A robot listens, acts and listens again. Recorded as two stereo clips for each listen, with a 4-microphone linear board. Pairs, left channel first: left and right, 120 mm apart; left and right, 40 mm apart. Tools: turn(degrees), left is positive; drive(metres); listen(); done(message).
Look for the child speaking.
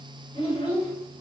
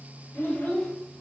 turn(degrees=55)
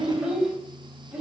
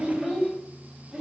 turn(degrees=-10)
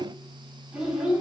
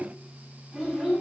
turn(degrees=-10)
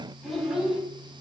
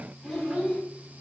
done("Facing the child speaking, over 4 m away.")